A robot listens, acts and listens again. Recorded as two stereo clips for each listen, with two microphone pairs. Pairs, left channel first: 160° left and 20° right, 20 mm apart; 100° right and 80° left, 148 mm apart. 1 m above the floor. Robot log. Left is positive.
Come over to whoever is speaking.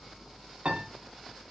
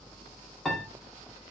cmd idle
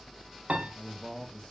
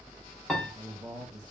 note: The man speaking: 120° left.
cmd yaw +120
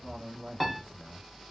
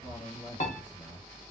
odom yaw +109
note: The man speaking is now 10° left.
cmd yaw +10
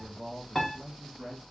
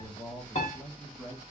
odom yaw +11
cmd fwd 1.0
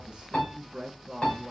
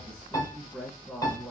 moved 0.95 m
cmd fwd 1.0
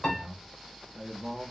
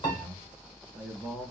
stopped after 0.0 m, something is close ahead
note: The man speaking is now 10° left.
cmd yaw +10
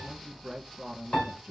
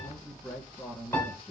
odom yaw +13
end: Arrived at the man speaking, straight ahead.